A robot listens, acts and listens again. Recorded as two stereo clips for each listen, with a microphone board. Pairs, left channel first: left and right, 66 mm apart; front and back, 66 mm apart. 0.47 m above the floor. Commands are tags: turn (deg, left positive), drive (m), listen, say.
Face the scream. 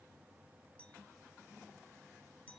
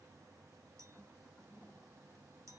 <listen/>
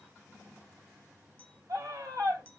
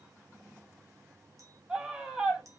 <turn deg="-100"/>
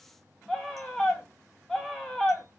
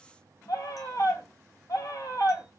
<say>Found it: a scream, straight ahead.</say>